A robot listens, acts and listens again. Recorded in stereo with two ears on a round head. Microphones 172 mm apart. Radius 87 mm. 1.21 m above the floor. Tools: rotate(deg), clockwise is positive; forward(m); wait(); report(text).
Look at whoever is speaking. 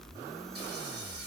wait()
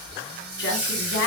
rotate(-65)
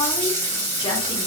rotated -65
wait()
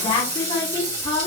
rotate(-25)
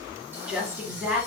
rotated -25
report("Facing the woman speaking, 1 to 2 m away.")